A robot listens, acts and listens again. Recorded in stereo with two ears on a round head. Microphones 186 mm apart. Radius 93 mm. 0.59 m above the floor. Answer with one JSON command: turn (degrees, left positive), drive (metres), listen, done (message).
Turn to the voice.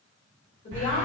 {"turn": 35}
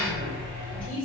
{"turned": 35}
{"turn": 10}
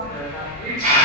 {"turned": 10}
{"listen": true}
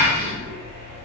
{"listen": true}
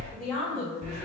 {"done": "Found it: a woman speaking, straight ahead, 1 to 2 m away."}